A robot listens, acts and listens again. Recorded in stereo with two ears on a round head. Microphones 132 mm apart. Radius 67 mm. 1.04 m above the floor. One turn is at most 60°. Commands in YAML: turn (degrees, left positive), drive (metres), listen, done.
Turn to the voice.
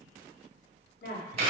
turn: 60
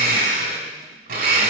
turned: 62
listen: true
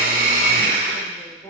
turn: 20
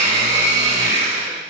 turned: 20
listen: true
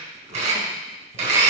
listen: true
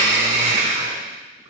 done: "I heard a woman speaking from this way, but can't make it out now."